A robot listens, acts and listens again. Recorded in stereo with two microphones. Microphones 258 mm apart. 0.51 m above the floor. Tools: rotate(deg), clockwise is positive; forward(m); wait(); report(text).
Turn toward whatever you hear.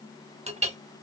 rotate(25)
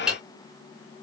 report("Found it: a clink, straight ahead.")